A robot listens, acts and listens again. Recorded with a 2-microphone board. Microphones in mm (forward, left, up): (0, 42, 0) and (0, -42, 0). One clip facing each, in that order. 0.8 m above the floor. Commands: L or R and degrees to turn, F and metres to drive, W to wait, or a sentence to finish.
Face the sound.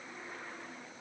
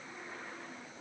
W
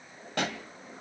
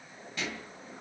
L70
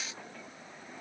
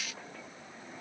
W
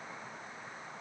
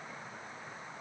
I heard a pop, but can't make it out now. It was about straight ahead or 40° left.